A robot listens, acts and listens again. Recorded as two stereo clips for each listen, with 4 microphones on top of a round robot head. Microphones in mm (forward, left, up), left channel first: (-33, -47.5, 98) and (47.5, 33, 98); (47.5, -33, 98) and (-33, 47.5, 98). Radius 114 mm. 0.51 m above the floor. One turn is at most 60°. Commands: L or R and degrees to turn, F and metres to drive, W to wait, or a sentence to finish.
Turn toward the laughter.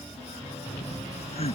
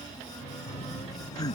R60
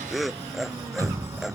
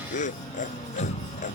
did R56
R45
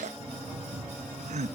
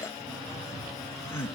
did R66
L25
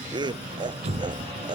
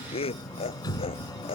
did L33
Found it: laughter, straight ahead.